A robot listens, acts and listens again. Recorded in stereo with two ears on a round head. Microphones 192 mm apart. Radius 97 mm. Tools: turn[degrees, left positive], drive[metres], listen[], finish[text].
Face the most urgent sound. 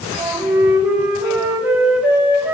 Action: listen[]
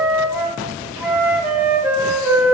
Action: listen[]
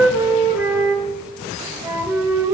Action: finish[I can't make out anything urgent, only a flute.]